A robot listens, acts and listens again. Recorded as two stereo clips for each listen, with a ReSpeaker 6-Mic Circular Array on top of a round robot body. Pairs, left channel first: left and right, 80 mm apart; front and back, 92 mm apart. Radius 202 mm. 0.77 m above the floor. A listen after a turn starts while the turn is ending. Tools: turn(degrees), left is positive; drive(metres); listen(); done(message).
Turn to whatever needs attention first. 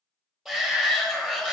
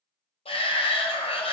done("Facing the shout.")